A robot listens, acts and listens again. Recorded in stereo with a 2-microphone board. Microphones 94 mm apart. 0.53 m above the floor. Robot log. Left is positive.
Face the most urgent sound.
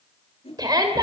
note: The shout: about 45° right or 135° right.
cmd yaw -45
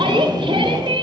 note: So it is at 80° right.
cmd yaw -80
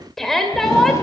end: Found it: a shout, straight ahead, 2 to 4 m away.